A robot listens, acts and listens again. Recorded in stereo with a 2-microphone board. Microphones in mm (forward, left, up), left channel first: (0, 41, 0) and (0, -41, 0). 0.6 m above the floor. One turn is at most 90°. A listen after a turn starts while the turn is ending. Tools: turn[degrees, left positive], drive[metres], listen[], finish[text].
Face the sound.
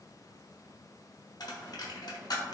Thought: The dropped coin: about 60° left or 120° left.
Action: turn[60]
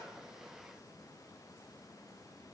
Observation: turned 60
Action: listen[]
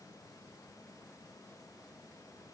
Action: finish[I heard a dropped coin, but can't make it out now. It was about straight ahead or 60° left.]